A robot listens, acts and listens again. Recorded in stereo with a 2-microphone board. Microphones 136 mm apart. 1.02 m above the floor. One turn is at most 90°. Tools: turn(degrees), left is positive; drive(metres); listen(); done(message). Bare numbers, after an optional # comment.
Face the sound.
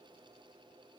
listen()
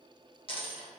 # The dropped coin: about 40° left or 140° left.
turn(40)
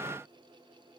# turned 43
listen()
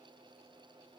done("I heard a dropped coin, but can't make it out now. It was about straight ahead or 95° left.")